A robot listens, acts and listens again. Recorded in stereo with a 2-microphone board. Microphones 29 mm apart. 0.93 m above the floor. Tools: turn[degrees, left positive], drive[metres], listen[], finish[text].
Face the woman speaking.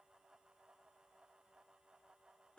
Action: listen[]
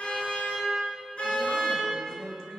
Thought: The woman speaking: about 25° left or 155° left.
Action: turn[25]
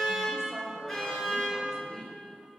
Thought: The woman speaking: about 15° left or 165° left.
Action: turn[15]
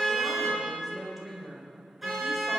Action: finish[Found it: a woman speaking, straight ahead.]